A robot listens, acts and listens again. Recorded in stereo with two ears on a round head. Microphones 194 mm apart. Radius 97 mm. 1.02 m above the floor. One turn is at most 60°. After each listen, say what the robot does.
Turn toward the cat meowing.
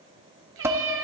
Turn 60° right.
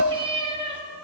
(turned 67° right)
Turn 25° right.
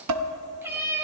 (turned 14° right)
Turn 15° right.
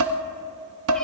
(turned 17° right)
Keep listening.
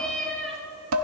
Found it: a cat meowing, straight ahead.